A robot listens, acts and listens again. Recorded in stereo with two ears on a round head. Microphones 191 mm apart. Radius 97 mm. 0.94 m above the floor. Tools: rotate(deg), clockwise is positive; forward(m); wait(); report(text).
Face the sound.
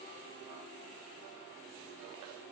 wait()
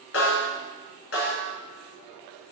rotate(-60)
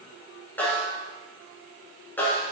rotate(-10)
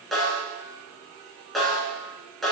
report("Found it: a snare drum, straight ahead.")